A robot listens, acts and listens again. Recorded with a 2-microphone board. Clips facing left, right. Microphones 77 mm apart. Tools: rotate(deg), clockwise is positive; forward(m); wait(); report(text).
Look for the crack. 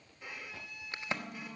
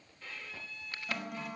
rotate(-25)
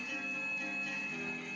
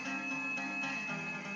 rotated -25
wait()
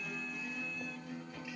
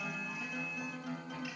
report("I heard a crack, but can't make it out now. It was about straight ahead or 130° left.")